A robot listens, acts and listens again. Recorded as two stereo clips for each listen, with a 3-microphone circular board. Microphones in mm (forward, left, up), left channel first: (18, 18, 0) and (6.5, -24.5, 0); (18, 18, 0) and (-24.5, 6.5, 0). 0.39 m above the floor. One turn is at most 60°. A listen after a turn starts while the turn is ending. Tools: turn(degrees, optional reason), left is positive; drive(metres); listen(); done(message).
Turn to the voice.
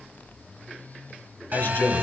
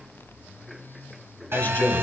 turn(degrees=45, reason="The man speaking: 45° left.")
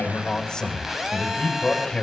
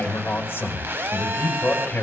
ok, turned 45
done("Facing the man speaking, 2 to 4 m away.")